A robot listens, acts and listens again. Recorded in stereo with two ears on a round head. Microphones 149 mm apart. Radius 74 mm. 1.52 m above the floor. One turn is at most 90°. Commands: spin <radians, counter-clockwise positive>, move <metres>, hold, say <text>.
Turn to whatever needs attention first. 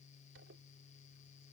hold
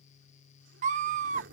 spin -0.79
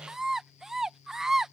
say Facing the scream.